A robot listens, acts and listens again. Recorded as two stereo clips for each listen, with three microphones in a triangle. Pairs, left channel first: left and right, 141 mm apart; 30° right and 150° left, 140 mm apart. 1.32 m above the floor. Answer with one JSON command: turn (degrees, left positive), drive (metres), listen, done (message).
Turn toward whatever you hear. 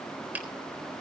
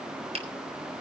{"turn": -165}
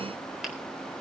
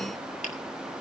{"listen": true}
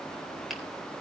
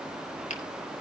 {"listen": true}
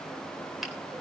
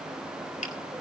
{"done": "I heard a finger snap from this way, but can't make it out now."}